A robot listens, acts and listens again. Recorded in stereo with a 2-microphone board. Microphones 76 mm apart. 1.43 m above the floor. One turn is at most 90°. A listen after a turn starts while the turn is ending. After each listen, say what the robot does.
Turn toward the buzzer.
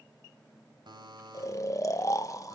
Turn 70° right.
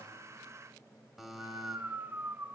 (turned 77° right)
Found it: a buzzer, straight ahead.